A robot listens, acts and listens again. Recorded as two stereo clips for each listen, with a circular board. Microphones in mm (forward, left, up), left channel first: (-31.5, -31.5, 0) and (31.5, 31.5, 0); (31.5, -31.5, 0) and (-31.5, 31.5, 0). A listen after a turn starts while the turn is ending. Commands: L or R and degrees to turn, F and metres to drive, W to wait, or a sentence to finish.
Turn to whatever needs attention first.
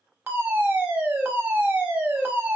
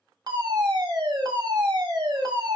L110
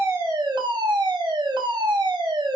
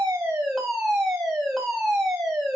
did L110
L50
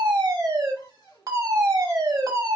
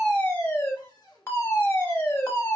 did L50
L10
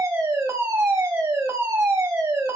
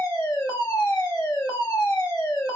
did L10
Facing the fire alarm, 1 to 2 m away.